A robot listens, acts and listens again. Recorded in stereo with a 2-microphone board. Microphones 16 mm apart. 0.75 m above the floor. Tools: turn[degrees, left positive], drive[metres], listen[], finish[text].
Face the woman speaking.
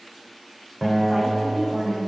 Thought: The woman speaking: about 20° right or 160° right.
Action: turn[-20]
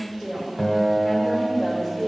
Thought: The woman speaking: about 25° right or 155° right.
Action: turn[-25]
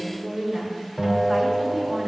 Thought: The woman speaking: about 35° right or 145° right.
Action: turn[-35]
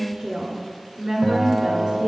Thought: So it is at 120° right.
Action: turn[-120]
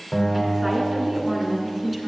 Action: finish[Facing the woman speaking.]